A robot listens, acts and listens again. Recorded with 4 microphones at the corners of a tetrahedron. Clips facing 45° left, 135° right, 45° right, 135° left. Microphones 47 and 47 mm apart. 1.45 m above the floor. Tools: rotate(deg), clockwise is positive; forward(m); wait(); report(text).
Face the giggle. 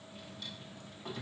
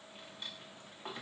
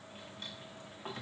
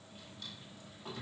wait()
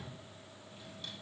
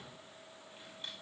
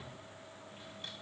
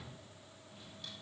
wait()
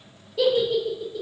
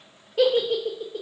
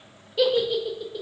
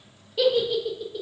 rotate(130)
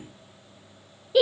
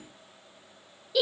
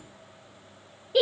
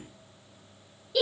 report("Facing the giggle.")